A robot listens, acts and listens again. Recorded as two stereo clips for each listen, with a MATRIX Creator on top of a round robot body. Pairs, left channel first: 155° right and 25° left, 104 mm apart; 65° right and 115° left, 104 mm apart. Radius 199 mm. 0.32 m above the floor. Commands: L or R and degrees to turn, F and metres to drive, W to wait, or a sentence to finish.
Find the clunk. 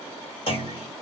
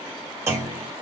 L175
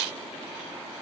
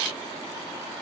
Facing where the clunk came from. I can't hear it now.